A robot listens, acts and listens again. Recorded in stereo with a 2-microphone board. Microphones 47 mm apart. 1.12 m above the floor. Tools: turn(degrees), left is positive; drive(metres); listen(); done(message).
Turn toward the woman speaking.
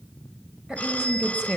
turn(degrees=-15)
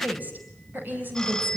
turn(degrees=-40)
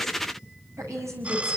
turn(degrees=-95)
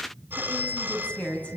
turn(degrees=25)
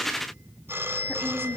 listen()
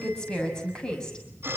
turn(degrees=15)
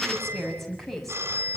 done("Found it: a woman speaking, straight ahead.")